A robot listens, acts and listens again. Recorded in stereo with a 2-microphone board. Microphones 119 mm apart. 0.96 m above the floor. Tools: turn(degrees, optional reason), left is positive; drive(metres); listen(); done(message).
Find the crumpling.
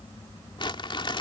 turn(degrees=45, reason="The crumpling: about 45° left or 135° left.")
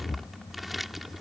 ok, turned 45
done("Found it: crumpling, straight ahead.")